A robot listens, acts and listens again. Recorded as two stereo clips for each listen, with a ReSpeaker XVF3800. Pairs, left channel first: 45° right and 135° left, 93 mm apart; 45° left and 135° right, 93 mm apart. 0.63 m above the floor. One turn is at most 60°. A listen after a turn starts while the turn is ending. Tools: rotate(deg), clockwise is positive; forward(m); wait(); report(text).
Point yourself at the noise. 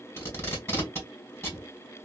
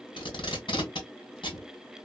rotate(-20)
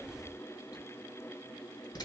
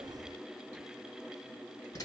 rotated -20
report("Facing the tape being pulled, 2 to 4 m away.")